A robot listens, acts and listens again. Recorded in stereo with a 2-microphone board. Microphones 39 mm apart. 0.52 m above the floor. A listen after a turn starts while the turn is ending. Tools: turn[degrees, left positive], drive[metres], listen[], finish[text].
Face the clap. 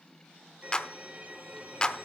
Thought: The clap: about 25° left or 155° left.
Action: turn[25]
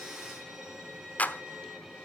Thought: So it is at 125° left.
Action: turn[125]
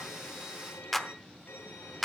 Action: finish[Facing the clap, under 1 m away.]